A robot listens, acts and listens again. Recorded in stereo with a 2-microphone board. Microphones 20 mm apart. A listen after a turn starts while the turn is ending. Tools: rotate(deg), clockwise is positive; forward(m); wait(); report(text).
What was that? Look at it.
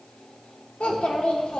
rotate(-60)
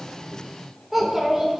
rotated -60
rotate(10)
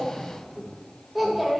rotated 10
rotate(10)
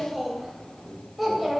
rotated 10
report("Facing the child speaking, 2 to 4 m away.")